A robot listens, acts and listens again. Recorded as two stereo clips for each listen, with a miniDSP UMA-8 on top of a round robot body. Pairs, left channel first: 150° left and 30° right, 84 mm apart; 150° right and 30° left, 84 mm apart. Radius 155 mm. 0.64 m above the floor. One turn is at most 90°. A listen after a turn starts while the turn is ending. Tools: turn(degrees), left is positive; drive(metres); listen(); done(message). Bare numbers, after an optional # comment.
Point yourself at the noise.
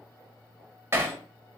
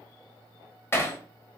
# The hammering: 90° right.
turn(-90)
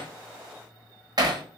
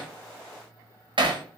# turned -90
# The hammering is now 10° left.
turn(10)
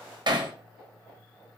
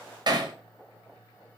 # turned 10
done("Facing the hammering.")